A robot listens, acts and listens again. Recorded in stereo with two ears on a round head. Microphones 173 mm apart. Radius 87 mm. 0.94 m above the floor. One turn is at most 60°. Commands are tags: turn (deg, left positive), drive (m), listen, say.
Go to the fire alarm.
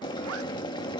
<listen/>
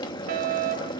<turn deg="-50"/>
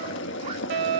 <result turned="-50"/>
<turn deg="-60"/>
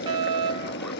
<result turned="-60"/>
<turn deg="-30"/>
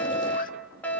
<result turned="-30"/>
<turn deg="10"/>
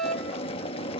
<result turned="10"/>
<drive m="1.0"/>
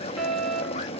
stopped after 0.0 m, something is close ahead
<say>Something is in my way. I am facing the fire alarm but have not reached it.</say>